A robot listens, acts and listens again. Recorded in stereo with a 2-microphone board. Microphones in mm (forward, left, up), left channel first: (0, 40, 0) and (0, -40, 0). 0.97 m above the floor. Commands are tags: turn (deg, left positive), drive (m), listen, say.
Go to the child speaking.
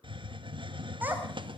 <turn deg="-20"/>
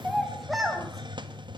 <drive m="1.0"/>
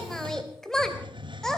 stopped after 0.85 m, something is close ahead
<say>Something is in my way. I am facing the child speaking but have not reached it.</say>